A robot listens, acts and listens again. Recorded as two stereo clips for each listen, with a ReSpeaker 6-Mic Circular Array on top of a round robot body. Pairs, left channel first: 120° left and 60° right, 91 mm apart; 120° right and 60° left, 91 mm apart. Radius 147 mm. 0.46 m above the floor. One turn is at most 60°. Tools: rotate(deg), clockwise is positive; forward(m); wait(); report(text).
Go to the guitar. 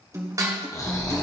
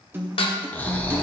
forward(1.0)
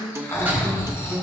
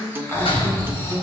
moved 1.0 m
forward(1.0)
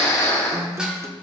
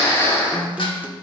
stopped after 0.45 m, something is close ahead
rotate(10)
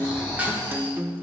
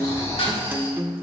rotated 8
report("I am next to the guitar.")